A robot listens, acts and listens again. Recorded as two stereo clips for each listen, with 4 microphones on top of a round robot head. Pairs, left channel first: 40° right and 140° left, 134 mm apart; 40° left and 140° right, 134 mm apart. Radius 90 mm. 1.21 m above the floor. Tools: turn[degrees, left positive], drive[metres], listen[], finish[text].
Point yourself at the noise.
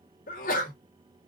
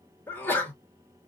Thought: The sneeze: 35° right.
Action: turn[-35]
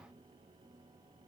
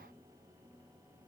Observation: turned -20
Thought: Nothing new. It was at 15° right.
Action: turn[-15]
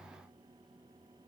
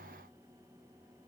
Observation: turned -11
Action: finish[I heard a sneeze from this way, but can't make it out now.]